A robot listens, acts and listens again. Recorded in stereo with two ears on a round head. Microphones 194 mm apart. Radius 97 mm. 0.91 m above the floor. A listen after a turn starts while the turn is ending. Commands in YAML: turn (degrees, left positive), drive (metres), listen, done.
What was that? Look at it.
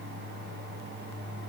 listen: true
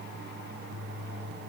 listen: true
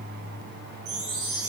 turn: -70
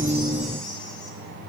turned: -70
listen: true
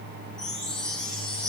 done: "Found it: a chime, straight ahead."